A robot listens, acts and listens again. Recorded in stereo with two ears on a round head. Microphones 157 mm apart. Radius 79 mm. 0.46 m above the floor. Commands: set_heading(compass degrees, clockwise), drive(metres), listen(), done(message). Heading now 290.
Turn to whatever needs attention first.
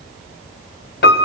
listen()
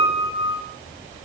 listen()
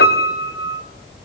done("I can't make out anything urgent to turn to.")